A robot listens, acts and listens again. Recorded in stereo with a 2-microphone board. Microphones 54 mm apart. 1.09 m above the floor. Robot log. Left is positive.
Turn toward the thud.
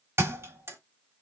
note: The thud: about 50° right or 130° right.
cmd yaw -50
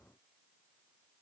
cmd idle
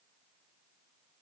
end: I heard a thud, but can't make it out now. It was about straight ahead or 80° right.